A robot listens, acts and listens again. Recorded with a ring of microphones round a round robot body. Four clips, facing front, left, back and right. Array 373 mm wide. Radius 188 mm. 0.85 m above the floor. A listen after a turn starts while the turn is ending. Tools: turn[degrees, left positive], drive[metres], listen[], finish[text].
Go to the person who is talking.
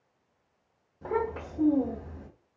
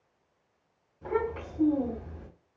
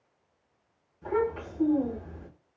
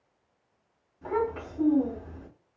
Thought: The child speaking: 15° right.
Action: turn[-15]
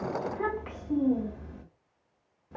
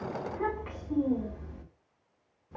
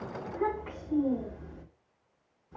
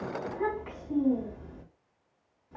Action: drive[1.0]
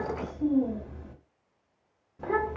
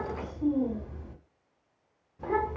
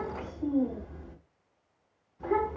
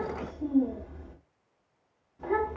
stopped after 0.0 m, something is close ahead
Action: finish[Blocked. The child speaking is further on, straight ahead.]